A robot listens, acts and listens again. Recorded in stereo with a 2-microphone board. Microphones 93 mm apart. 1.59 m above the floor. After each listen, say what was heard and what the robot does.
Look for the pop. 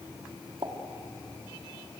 The pop: about 70° right or 110° right. Turn 70° right.
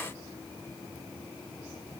Keep listening.
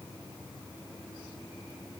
I heard a pop, but can't make it out now. It was about straight ahead or 40° right.